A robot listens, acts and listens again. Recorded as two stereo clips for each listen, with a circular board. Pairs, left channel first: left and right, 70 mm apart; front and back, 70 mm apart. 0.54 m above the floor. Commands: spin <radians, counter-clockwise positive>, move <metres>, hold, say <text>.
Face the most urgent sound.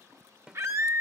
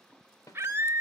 spin -2.27
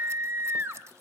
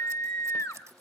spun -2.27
spin -0.61
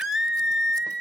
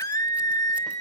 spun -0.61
say Found it: a scream, straight ahead.